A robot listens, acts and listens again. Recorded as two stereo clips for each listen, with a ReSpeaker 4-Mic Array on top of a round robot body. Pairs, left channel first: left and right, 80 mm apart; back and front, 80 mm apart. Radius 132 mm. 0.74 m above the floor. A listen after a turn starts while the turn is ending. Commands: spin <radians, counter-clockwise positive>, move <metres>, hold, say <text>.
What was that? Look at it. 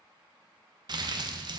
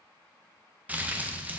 spin -1.22
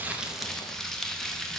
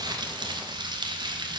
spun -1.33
say Facing the crumpling, under 1 m away.